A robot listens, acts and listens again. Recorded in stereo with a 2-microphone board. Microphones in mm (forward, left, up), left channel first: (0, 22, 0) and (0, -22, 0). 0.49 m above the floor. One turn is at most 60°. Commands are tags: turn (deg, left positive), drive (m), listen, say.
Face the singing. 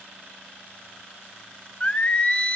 <turn deg="25"/>
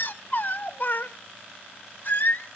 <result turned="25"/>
<turn deg="60"/>
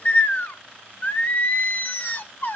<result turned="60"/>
<turn deg="50"/>
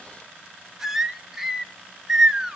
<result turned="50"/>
<turn deg="-10"/>
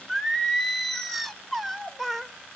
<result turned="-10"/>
<say>Facing the singing, under 1 m away.</say>